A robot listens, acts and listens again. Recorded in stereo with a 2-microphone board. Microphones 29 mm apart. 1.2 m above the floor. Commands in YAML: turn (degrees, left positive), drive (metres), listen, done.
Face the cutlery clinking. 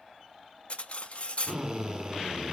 turn: 50
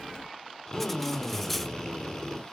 listen: true
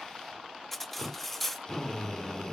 turn: 10
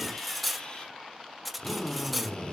done: "Found it: cutlery clinking, straight ahead."